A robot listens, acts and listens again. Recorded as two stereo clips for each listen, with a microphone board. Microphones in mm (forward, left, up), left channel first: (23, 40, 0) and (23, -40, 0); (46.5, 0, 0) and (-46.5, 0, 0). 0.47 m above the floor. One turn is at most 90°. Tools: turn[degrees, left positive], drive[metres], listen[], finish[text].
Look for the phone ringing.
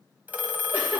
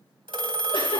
Thought: The phone ringing: 160° right.
Action: turn[-90]
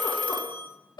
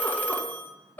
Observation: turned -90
Thought: The phone ringing is now 70° right.
Action: turn[-70]
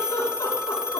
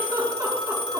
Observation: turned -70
Thought: The phone ringing is now 15° right.
Action: turn[-15]
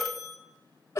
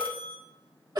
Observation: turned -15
Action: finish[Found it: a phone ringing, straight ahead, 1 to 2 m away.]